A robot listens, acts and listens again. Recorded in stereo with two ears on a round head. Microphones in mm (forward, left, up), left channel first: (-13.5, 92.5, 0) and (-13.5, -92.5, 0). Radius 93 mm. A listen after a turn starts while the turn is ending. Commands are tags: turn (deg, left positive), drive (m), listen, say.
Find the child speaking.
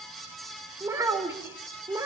<turn deg="-30"/>
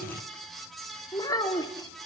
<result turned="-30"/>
<turn deg="15"/>
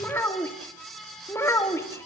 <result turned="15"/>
<turn deg="10"/>
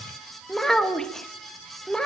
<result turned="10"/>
<say>Found it: a child speaking, straight ahead.</say>